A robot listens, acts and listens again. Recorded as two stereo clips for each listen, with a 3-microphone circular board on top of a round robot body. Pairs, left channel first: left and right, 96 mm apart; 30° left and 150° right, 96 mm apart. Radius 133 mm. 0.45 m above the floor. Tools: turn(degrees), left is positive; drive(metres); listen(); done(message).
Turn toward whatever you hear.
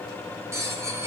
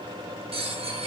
turn(degrees=-150)
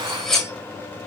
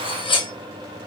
done("Facing the cutlery clinking, 1 to 2 m away.")